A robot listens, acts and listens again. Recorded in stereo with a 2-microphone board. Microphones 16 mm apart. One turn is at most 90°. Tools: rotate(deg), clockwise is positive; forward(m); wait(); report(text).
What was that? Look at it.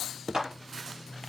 rotate(60)
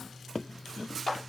report("Facing the clap.")